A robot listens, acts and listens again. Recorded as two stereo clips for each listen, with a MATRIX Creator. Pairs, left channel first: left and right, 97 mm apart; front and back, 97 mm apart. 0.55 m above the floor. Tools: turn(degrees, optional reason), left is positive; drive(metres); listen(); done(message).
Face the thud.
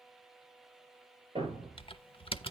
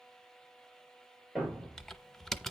turn(degrees=-85, reason="The thud: 85° right.")
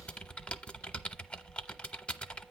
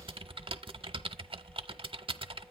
done("Facing where the thud came from. I can't hear it now.")